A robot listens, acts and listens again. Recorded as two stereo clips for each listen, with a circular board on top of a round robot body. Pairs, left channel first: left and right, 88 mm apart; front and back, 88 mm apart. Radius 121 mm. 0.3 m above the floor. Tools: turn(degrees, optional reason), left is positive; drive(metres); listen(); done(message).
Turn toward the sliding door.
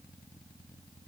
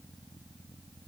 listen()
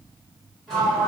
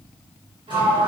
turn(degrees=175, reason="The sliding door: 175° left.")
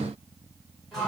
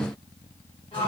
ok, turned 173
done("Found it: a sliding door, straight ahead.")